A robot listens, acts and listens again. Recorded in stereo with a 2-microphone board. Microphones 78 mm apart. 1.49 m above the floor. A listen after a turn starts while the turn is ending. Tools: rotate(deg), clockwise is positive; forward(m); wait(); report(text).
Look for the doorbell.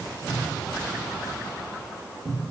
wait()
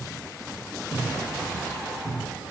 wait()
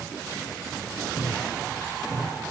report("I can't make out a doorbell, only a cupboard door.")